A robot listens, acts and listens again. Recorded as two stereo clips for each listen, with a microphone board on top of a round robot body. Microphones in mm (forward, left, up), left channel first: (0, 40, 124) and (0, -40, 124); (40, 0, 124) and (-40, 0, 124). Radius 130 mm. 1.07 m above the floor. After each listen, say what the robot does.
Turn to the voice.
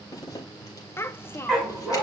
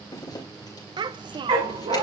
Turn 155° left.
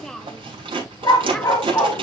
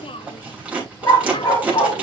Facing the child speaking, under 1 m away.